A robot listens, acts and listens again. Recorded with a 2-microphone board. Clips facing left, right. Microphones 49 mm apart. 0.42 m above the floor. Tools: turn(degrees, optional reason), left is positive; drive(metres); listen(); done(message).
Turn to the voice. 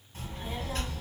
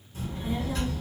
turn(degrees=55, reason="The child speaking: about 55° left or 125° left.")
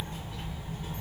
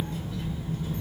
turn(degrees=65, reason="So it is at 65° left.")
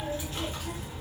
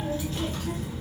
turn(degrees=15, reason="The child speaking is now 15° left.")
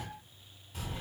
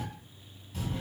done("Found it: a child speaking, straight ahead.")